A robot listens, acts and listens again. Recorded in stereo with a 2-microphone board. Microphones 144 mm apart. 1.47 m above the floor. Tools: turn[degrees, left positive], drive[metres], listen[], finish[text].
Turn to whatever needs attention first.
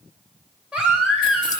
Action: turn[-30]
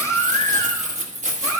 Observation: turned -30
Thought: So it is at 20° left.
Action: turn[20]
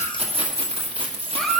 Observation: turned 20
Action: finish[Facing the baby crying.]